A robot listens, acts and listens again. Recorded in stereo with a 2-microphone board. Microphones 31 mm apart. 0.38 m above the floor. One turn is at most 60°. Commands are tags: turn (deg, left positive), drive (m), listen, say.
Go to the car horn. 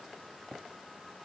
<listen/>
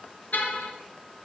<turn deg="60"/>
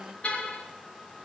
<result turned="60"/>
<turn deg="50"/>
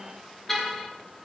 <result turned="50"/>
<turn deg="10"/>
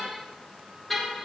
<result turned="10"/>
<drive m="1.0"/>
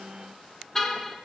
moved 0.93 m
<turn deg="15"/>
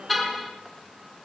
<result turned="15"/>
<drive m="1.0"/>
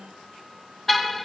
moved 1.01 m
<drive m="1.0"/>
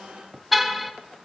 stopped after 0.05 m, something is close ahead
<say>Arrived at the car horn, straight ahead.</say>